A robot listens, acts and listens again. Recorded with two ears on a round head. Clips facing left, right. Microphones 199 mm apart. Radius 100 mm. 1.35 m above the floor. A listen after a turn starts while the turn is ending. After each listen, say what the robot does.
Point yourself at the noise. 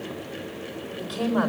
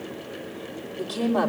Turn 90° right.
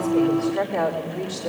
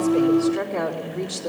Turn 10° right.
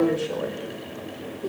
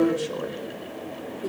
Found it: a woman speaking, straight ahead.